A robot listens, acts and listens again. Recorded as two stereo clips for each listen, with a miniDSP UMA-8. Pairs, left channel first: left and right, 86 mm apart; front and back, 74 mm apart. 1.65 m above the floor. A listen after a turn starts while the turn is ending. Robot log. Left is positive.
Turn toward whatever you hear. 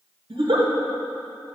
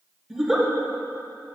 note: The giggle: 95° right.
cmd yaw -95
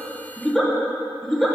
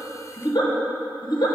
end: Found it: a giggle, straight ahead, 1 to 2 m away.